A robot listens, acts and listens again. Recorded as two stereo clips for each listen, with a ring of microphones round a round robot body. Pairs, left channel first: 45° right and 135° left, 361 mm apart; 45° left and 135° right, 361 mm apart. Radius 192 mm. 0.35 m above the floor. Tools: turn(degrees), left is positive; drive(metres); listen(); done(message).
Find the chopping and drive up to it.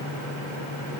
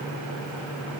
listen()
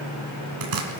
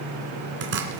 turn(degrees=165)
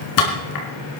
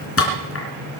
turn(degrees=-10)
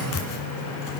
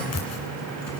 drive(metres=1.0)
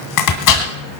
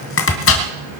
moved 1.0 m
turn(degrees=-10)
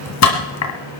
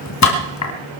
drive(metres=1.0)
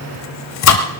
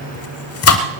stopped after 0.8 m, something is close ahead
done("I am next to the chopping.")